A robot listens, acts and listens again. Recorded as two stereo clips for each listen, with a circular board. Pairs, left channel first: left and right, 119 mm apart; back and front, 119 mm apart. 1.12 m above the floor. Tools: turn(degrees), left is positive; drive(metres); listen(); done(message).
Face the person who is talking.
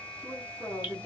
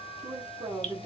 turn(degrees=25)
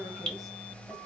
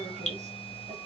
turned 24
listen()
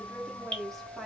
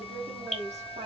done("Facing the woman speaking, 1 to 2 m away.")